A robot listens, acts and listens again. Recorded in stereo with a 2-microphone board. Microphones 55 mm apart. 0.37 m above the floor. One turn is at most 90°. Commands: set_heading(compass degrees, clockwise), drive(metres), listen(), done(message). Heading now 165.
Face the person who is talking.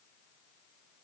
listen()
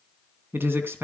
set_heading(210)
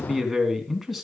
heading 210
done("Facing the man speaking.")